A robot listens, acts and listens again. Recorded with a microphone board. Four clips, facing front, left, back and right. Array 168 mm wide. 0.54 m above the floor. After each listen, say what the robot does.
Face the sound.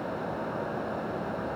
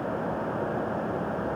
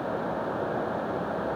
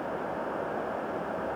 Keep listening.
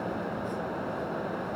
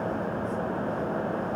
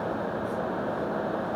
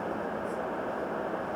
Keep listening.
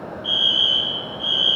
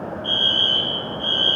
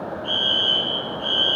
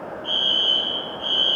Turn 140° left.
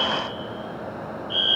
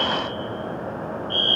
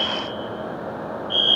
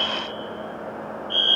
Turn 25° right.
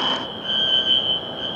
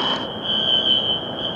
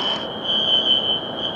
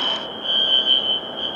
Facing the fire alarm.